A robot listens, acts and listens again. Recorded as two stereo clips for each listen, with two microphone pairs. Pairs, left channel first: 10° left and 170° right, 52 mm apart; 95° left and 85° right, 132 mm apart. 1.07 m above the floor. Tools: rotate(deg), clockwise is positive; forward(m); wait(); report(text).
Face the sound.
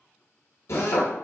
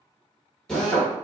rotate(-10)
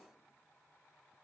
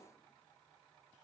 wait()
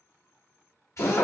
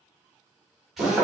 report("Facing the drill.")